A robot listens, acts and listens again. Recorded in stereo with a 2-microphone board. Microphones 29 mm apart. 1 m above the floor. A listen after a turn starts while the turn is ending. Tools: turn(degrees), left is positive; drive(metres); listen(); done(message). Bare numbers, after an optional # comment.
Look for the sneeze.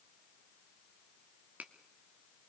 listen()
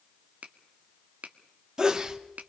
# The sneeze: about 30° right or 150° right.
turn(-30)
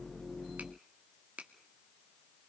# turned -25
listen()
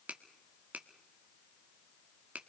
done("I heard a sneeze, but can't make it out now. It was about 5° right or 125° right.")